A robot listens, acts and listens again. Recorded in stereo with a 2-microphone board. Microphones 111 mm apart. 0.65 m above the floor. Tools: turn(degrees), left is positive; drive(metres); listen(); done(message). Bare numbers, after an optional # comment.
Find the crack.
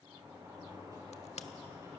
turn(90)
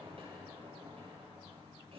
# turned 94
done("I heard a crack from this way, but can't make it out now.")